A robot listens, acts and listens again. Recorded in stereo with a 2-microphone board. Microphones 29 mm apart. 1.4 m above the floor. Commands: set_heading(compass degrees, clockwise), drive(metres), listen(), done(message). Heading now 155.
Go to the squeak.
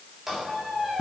set_heading(185)
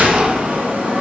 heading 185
listen()
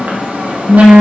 listen()
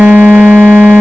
done("I heard a squeak, but can't make it out now. It was about 15° left or 135° right. I did not reach it.")